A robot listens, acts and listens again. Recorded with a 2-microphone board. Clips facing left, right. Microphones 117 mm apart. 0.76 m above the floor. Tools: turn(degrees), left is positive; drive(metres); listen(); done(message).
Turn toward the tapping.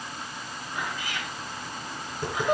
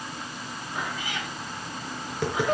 turn(degrees=-90)
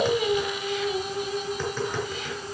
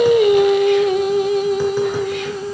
listen()
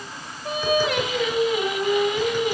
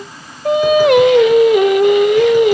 listen()
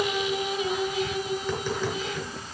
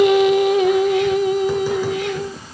done("Facing where the tapping came from. I can't hear it now.")